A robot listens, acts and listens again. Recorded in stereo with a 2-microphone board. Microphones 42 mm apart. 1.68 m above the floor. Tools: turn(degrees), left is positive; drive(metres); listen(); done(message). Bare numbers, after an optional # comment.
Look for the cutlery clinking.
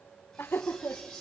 turn(30)
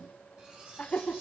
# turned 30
# So it is at 20° right.
turn(-20)
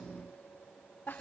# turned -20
listen()
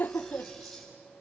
done("Found it: cutlery clinking, straight ahead, over 4 m away.")